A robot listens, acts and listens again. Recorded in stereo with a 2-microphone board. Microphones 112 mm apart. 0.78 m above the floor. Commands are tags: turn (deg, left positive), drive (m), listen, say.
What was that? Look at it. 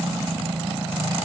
<listen/>
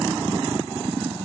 <listen/>
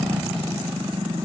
<say>I can't make out anything.</say>